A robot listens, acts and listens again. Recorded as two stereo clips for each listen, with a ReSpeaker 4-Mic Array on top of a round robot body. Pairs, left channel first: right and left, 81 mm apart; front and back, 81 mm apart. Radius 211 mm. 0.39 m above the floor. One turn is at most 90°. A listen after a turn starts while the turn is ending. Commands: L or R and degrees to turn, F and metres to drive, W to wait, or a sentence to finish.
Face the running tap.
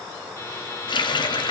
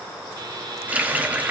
R90
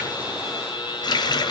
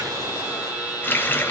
R65
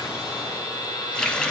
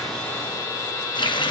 R10
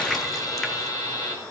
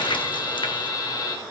W
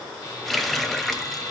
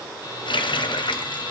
Found it: a running tap, straight ahead, 1 to 2 m away.